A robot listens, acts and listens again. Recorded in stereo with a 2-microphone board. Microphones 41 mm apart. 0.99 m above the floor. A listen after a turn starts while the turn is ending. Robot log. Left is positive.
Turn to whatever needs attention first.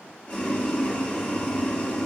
cmd idle
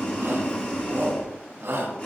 note: The shout: about 75° right or 105° right.
cmd yaw -75
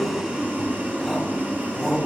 cmd idle
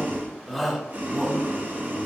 end: Facing the shout.